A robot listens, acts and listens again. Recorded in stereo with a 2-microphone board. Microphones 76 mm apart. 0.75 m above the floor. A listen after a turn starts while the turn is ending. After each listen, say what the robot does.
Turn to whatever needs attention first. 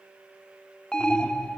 Turn 30° left.
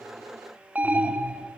Turn 20° right.
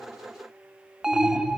Facing the alarm, under 1 m away.